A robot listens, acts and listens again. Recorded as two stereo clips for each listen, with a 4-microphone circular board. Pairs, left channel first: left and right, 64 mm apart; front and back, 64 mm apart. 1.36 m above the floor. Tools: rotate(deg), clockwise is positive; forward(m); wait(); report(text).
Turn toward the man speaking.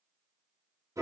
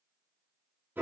wait()
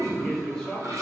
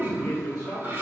rotate(-10)
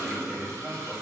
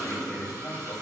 rotate(20)
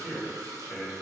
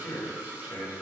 rotate(20)
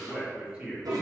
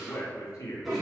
rotate(15)
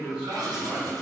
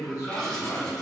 rotate(15)
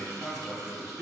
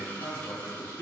report("Facing the man speaking, 1 to 2 m away.")